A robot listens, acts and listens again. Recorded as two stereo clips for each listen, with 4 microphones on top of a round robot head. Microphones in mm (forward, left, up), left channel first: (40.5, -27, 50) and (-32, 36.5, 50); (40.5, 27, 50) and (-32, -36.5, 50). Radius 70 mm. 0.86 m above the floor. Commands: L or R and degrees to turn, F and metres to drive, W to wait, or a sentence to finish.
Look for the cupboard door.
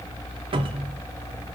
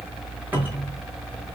L150
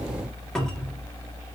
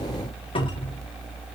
L40
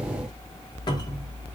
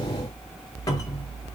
W
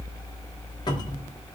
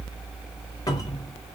Facing the cupboard door, 1 to 2 m away.